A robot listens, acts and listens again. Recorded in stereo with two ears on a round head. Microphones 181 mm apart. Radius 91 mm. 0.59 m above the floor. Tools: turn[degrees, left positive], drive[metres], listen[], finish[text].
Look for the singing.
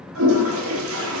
Action: listen[]
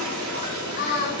Thought: The singing: about 50° left or 130° left.
Action: turn[50]
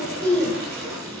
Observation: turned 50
Thought: So it is at 10° left.
Action: turn[10]
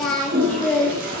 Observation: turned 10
Action: finish[Facing the singing.]